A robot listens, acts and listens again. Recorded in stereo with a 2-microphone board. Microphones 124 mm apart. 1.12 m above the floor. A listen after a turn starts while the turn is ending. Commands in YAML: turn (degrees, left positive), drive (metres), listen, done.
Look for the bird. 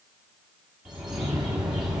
turn: -30
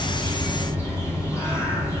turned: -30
turn: 25
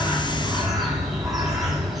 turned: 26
done: "Found it: a bird, straight ahead."